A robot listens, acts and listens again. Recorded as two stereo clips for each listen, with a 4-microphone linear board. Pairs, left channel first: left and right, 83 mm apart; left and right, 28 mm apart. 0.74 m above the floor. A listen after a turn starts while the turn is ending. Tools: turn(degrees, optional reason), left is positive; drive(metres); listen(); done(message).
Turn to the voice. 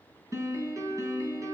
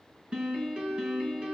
listen()
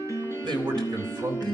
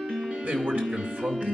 turn(degrees=-90)
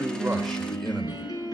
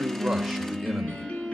listen()
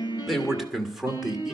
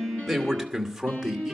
done("Facing the man speaking.")